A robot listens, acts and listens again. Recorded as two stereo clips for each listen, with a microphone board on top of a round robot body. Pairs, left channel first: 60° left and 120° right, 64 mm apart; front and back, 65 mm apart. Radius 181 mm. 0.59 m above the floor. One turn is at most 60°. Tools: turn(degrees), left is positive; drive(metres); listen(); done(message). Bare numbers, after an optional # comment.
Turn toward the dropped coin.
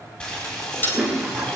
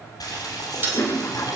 # The dropped coin: 120° left.
turn(60)
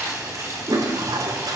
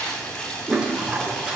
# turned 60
# Nothing new. It was at 60° left.
turn(60)
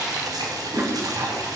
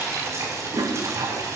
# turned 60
done("I heard a dropped coin from this way, but can't make it out now.")